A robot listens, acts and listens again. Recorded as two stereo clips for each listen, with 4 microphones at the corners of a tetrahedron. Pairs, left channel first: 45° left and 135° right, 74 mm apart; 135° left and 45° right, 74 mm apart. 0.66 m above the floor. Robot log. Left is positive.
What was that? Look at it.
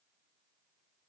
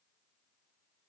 cmd idle
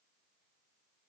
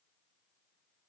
cmd idle
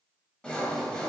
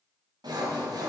note: The sawing: 30° right.
cmd yaw -30
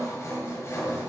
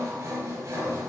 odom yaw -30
end: Found it: sawing, straight ahead.